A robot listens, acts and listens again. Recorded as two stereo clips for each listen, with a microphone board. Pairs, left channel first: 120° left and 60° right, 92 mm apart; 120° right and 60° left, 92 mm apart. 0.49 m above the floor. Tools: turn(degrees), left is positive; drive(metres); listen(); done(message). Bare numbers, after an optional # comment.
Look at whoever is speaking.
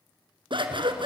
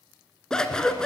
listen()
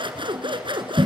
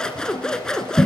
listen()
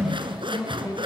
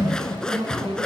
# The woman speaking: 65° left.
turn(65)
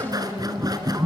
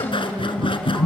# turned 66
done("Found it: a woman speaking, straight ahead, over 4 m away.")